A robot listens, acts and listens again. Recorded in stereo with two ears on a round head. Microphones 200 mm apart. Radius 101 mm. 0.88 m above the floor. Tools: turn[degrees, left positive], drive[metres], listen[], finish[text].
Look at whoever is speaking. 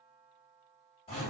Action: listen[]
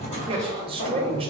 Thought: The man speaking: about 25° right or 155° right.
Action: turn[-25]
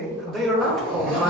Action: finish[Facing the man speaking.]